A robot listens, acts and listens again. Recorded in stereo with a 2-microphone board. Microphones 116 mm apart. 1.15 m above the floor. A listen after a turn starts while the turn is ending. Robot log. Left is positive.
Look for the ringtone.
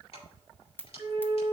note: The ringtone: about 15° left or 165° left.
cmd yaw +15
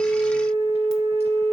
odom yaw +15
cmd idle
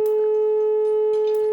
cmd idle
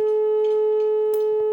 end: I heard a ringtone, but can't make it out now. It was about straight ahead or 150° left.